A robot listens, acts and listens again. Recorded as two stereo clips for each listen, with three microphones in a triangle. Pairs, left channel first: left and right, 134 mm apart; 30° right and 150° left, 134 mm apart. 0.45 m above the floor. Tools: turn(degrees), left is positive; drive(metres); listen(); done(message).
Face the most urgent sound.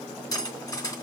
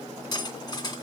listen()
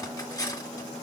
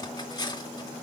listen()
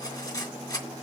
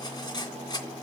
done("I can't make out anything urgent to turn to.")